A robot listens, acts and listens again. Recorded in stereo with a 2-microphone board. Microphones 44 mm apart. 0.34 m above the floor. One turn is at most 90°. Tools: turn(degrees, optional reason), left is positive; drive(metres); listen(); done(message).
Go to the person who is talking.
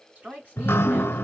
turn(degrees=-35, reason="The woman speaking: about 35° right or 145° right.")
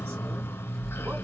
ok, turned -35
listen()
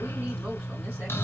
listen()
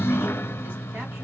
done("I heard a woman speaking, but can't make it out now. It was about straight ahead or 110° right. I did not reach it.")